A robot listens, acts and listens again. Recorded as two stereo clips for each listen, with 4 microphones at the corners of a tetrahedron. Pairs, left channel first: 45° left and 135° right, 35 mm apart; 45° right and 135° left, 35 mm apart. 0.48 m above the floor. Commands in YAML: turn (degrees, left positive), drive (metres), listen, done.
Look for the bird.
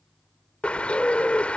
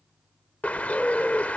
done: "Facing the bird."